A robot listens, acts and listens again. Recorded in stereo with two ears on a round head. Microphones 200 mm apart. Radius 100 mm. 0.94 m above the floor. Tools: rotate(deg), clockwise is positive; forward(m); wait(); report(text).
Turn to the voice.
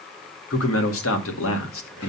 rotate(-65)
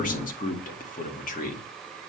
rotate(-40)
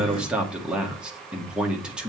report("Facing the man speaking, 1 to 2 m away.")